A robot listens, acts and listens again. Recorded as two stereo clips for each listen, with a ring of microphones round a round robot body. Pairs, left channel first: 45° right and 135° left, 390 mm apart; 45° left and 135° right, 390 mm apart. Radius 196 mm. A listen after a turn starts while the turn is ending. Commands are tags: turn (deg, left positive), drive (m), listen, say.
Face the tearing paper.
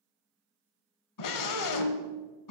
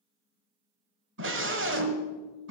<listen/>
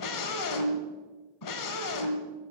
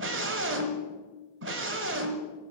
<listen/>
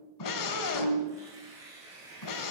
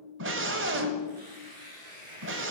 <turn deg="-145"/>
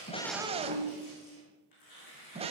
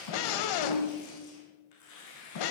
<say>Facing the tearing paper.</say>